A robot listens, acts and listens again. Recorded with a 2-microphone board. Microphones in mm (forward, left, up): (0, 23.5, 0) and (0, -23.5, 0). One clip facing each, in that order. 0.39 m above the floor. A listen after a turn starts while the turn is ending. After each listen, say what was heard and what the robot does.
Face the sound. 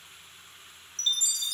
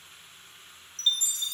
The chime: about 30° right or 150° right. Turn 30° right.
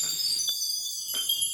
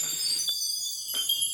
Facing the chime.